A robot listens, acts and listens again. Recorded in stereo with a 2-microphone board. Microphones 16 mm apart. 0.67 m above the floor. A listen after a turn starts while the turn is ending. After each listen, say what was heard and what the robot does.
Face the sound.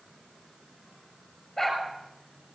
The dog barking: about 15° left or 165° left. Turn 15° left.
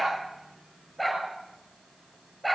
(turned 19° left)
Facing the dog barking.